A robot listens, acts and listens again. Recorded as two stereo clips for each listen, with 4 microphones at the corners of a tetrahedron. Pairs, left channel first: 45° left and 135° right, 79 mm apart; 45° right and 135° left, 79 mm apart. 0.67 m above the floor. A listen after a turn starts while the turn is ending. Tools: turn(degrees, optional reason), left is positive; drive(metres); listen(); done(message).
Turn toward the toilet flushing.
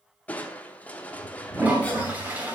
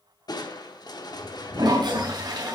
turn(degrees=155, reason="The toilet flushing: 155° left.")
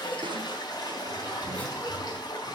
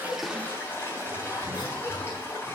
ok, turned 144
turn(degrees=15, reason="The toilet flushing is now 15° left.")
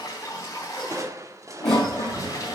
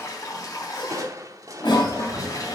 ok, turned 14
done("Facing the toilet flushing.")